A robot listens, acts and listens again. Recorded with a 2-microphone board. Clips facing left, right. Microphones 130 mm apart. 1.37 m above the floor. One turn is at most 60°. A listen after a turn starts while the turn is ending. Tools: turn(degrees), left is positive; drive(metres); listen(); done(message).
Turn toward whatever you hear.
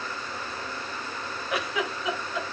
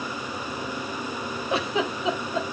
turn(degrees=-25)
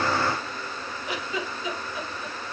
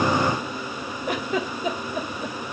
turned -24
turn(degrees=-60)
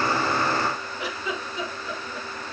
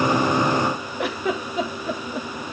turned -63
turn(degrees=-60)
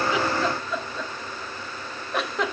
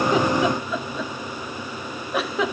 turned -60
done("Facing the giggle, 1 to 2 m away.")